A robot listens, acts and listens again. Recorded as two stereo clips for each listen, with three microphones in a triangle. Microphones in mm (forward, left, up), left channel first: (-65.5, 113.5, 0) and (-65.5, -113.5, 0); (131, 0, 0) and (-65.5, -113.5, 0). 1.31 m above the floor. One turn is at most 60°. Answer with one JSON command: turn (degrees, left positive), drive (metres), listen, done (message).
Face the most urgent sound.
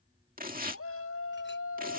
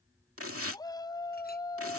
{"turn": 60}
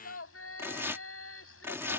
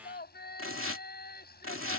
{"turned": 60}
{"turn": 60}
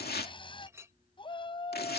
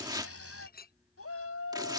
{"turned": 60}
{"turn": 20}
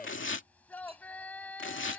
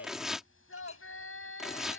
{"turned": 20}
{"done": "Found it: a shout, straight ahead."}